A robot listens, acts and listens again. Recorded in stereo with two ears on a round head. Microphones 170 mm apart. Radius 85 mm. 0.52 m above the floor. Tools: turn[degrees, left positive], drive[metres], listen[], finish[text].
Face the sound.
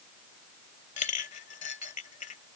Thought: The clink: about 40° left or 140° left.
Action: turn[40]
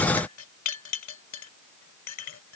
Thought: So it is at 100° left.
Action: turn[100]
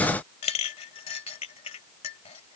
Thought: The clink is now 30° left.
Action: turn[30]
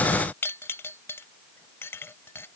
Thought: The clink is now 10° left.
Action: turn[10]
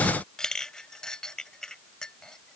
Action: finish[Facing the clink.]